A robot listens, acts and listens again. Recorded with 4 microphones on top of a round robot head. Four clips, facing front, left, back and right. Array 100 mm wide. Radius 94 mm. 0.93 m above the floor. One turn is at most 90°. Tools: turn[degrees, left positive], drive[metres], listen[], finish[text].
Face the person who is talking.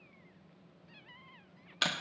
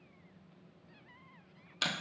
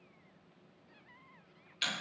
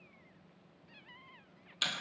Action: listen[]
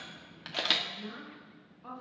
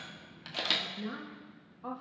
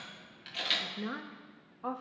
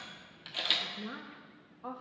Thought: The woman speaking: straight behind.
Action: turn[90]
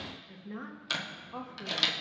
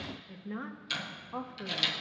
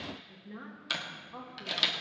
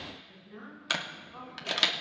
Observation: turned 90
Thought: The woman speaking is now 75° left.
Action: turn[75]
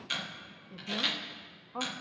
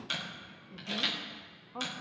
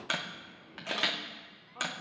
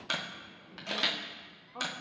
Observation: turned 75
Thought: The woman speaking is now 10° left.
Action: turn[10]
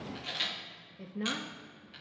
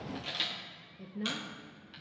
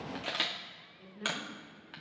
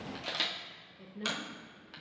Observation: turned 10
Action: finish[Found it: a woman speaking, straight ahead.]